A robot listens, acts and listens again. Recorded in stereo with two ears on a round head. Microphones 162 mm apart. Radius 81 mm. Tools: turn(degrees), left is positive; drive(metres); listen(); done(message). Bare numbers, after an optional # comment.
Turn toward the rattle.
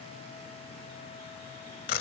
listen()
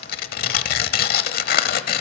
listen()
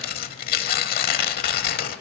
done("I can't make out a rattle to turn to.")